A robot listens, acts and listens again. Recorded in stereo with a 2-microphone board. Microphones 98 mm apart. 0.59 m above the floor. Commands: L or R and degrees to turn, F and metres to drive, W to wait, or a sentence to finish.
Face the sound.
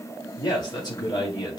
L45
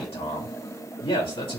L85
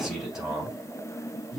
Found it: a man speaking, straight ahead.